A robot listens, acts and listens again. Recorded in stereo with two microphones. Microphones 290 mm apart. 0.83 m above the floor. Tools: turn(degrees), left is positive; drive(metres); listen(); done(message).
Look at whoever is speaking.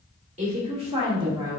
turn(degrees=-30)
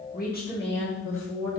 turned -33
turn(degrees=55)
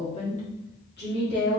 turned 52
turn(degrees=40)
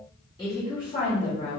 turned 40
turn(degrees=20)
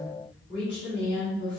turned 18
done("Found it: a woman speaking, straight ahead.")